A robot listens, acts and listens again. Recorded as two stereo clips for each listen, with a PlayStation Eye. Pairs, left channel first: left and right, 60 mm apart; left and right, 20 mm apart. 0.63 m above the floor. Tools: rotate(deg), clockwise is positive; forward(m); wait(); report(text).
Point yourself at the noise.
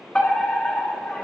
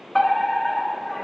rotate(-30)
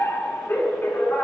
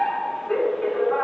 rotate(-135)
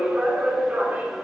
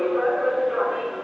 rotate(30)
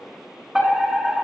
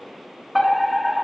rotate(10)
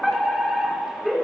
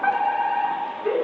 report("Found it: a fire alarm, straight ahead, 2 to 4 m away.")